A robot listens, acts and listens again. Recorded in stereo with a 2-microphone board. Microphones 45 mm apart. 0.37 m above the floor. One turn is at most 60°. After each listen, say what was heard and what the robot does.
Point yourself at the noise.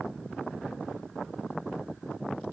Keep listening.
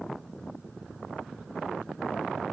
Keep listening.
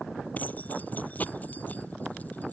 The keys jangling: about 40° left or 140° left. Turn 40° left.
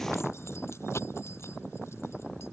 So it is at 100° left. Turn 60° left.
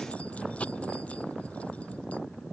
The keys jangling is now 30° left. Turn 30° left.
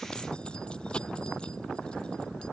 The keys jangling is now 20° left. Turn 20° left.
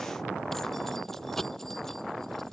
Found it: keys jangling, straight ahead.